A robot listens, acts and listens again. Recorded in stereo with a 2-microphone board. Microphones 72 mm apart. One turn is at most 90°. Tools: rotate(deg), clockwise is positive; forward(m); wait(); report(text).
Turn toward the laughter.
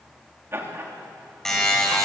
rotate(40)
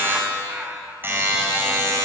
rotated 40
rotate(25)
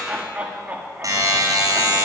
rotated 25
rotate(25)
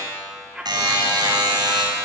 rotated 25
rotate(10)
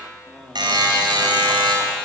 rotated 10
report("Facing the laughter.")